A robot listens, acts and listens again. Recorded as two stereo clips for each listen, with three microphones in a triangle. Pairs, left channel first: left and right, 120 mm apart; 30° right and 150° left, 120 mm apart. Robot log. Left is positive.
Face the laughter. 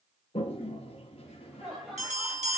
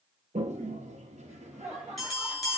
note: The laughter: straight behind.
cmd yaw +180
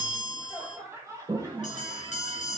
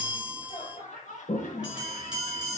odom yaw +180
note: The laughter is now 25° right.
cmd yaw -25
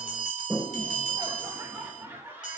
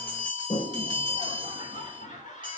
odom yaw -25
note: The laughter is now 15° right.
cmd yaw -15
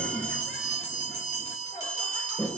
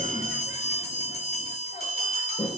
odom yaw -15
cmd idle
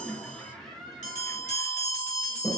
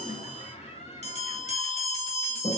end: Found it: laughter, straight ahead, 2 to 4 m away.